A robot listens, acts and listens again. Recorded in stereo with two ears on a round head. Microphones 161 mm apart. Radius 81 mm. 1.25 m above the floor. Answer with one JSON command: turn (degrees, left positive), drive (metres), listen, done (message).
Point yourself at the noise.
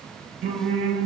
{"turn": -65}
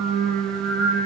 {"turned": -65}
{"turn": -55}
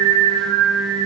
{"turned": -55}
{"done": "Facing the singing, over 4 m away."}